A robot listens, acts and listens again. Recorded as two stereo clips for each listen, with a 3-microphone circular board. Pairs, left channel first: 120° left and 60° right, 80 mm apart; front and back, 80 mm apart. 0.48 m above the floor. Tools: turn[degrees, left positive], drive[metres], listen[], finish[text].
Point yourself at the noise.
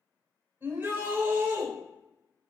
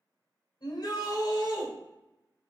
Action: finish[Facing the shout, 1 to 2 m away.]